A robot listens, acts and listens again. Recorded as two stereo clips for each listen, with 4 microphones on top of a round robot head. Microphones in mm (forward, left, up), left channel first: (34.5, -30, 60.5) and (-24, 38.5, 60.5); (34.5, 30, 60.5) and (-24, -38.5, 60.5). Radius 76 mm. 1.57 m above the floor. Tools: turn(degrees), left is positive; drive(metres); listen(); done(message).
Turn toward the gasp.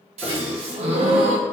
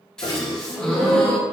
turn(degrees=135)
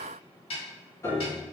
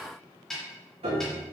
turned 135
done("I heard a gasp from this way, but can't make it out now.")